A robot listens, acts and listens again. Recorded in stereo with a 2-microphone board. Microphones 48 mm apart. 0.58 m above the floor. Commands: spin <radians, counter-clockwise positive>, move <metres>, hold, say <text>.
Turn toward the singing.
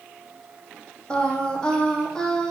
spin 0.52
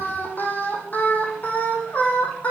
spin 2.62
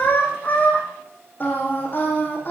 spin 0.70
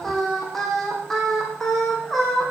say Facing the singing.